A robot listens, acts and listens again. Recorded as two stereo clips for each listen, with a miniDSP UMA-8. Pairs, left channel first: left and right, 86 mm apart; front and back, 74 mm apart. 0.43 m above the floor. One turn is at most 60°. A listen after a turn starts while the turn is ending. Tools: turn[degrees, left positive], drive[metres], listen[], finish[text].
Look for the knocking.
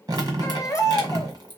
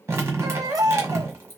Action: listen[]
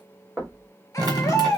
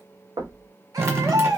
Thought: The knocking: 175° right.
Action: turn[-60]
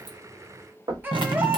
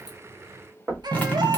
Thought: The knocking is now 120° right.
Action: turn[-60]
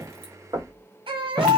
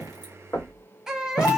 Thought: The knocking is now 55° right.
Action: turn[-55]
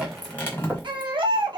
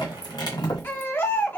Thought: The knocking is now 25° right.
Action: turn[-25]
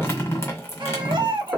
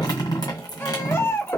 Thought: The knocking is now 20° right.
Action: turn[-20]
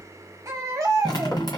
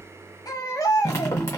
Action: listen[]
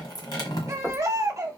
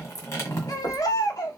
Action: finish[Facing the knocking.]